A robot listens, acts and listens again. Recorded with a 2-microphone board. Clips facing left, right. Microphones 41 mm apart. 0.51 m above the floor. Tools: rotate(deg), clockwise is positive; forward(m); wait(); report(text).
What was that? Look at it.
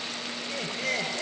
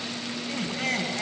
rotate(75)
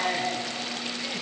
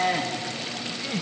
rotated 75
rotate(25)
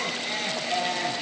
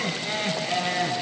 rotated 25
report("Facing the laughter, over 4 m away.")